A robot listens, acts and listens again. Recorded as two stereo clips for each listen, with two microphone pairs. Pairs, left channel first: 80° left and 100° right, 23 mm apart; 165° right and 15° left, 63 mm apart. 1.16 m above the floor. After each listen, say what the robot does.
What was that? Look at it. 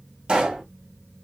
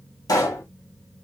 Turn 150° right.
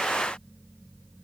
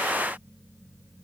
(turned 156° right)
I heard a pop from this way, but can't make it out now.